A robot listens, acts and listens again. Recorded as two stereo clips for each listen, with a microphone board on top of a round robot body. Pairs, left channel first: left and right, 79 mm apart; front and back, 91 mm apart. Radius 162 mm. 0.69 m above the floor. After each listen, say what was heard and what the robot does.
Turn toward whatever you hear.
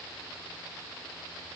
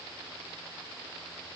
Keep listening.
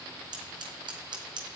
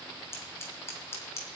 The scissors: 65° right. Turn 65° right.
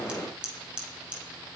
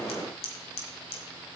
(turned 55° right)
The scissors is now 10° right. Turn 10° right.
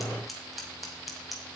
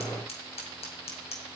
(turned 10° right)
Found it: scissors, straight ahead.